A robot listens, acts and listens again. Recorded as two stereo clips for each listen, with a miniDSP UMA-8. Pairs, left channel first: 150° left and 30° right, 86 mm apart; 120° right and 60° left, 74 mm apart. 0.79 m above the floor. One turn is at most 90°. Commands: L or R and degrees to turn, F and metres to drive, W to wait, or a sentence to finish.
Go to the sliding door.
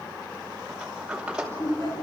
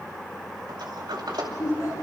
L50
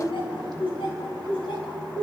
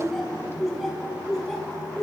W
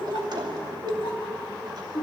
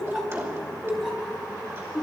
F1.0
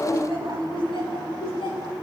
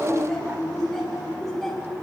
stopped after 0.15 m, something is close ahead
W
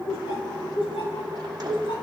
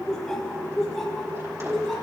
W
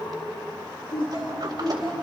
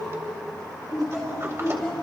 I heard a sliding door from this way, but can't make it out now. I did not reach it.